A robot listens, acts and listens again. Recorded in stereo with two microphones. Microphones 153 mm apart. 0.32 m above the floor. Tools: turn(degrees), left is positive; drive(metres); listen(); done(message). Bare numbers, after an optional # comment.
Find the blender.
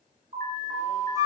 listen()
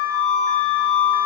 listen()
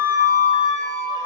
done("I can't make out a blender, only an alarm and a flute.")